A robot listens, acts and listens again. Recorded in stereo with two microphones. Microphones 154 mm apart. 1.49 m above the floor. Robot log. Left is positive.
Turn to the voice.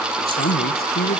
cmd yaw +90
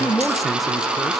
end: Found it: a man speaking, straight ahead.